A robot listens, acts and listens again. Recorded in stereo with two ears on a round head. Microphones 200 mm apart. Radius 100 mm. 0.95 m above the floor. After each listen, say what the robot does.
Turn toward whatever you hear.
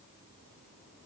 Keep listening.
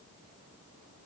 Keep listening.
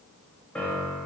Turn 30° left.
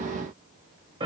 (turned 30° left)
Turn 25° right.
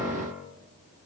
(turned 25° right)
Turn 10° right.
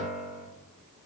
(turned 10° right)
Found it: a piano, straight ahead.